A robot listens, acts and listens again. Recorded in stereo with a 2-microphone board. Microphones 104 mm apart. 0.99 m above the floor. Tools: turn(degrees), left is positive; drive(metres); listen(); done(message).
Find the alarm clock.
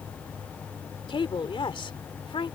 listen()
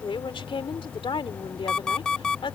turn(degrees=30)
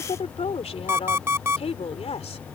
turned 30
turn(degrees=-20)
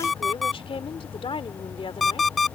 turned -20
done("Found it: an alarm clock, straight ahead.")